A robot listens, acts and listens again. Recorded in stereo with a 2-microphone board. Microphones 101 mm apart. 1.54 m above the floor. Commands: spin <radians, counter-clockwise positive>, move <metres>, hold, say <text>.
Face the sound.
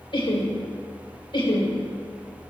spin 0.87
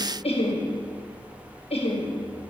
spin 1.40
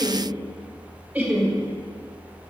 spin -0.35
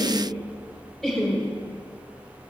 say Facing the laughter.